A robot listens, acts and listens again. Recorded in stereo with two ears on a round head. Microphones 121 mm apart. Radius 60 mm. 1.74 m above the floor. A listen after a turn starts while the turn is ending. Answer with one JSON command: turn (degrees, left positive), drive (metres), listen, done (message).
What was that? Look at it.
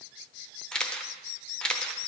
{"turn": 30}
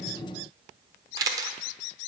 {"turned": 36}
{"turn": -30}
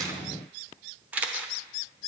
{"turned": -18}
{"turn": -15}
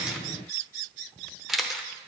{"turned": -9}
{"done": "Found it: a camera shutter, straight ahead."}